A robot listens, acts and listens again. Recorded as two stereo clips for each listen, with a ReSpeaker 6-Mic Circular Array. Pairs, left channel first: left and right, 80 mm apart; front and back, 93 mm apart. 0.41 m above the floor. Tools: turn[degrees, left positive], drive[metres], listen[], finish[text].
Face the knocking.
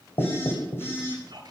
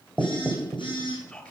Thought: The knocking: 110° left.
Action: turn[110]
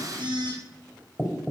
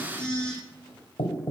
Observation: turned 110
Action: finish[Facing the knocking.]